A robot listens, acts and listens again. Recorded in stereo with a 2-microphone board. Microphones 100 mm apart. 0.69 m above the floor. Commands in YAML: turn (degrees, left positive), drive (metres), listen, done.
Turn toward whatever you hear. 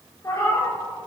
turn: 30
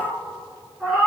turn: -10
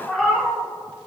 done: "Found it: a cat meowing, straight ahead."